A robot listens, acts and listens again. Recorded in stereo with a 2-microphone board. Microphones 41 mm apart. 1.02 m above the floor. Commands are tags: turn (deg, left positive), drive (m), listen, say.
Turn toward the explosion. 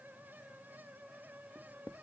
<listen/>
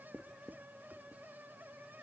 <listen/>
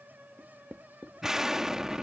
<turn deg="-30"/>
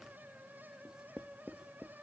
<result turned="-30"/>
<listen/>
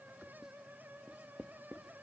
<say>I heard an explosion, but can't make it out now. It was about 15° left or 135° right.</say>